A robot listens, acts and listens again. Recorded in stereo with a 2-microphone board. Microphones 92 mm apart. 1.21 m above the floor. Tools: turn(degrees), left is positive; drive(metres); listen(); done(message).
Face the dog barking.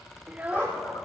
turn(degrees=20)
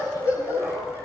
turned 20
turn(degrees=35)
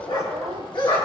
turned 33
turn(degrees=120)
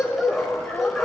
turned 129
done("Facing the dog barking.")